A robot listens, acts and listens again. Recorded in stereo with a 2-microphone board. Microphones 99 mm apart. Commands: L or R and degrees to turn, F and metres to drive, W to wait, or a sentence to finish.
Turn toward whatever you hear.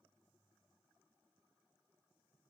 W
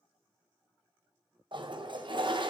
R55
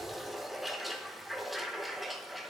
Found it: a toilet flushing, straight ahead, 1 to 2 m away.